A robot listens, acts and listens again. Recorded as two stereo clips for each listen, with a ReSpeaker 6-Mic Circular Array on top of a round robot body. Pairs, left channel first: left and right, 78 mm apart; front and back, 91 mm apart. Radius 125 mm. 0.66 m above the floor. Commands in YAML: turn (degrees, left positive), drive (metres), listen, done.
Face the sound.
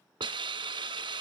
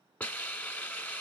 turn: -70
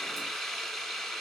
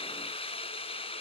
done: "Found it: a hiss, straight ahead."